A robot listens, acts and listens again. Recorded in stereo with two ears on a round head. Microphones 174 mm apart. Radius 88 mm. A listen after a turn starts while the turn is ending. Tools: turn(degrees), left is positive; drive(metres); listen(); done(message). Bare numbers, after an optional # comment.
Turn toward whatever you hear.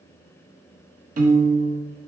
# The piano: about 45° right or 135° right.
turn(-45)
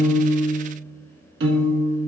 # So it is at 85° right.
turn(-85)
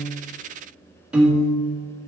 done("Found it: a piano, straight ahead.")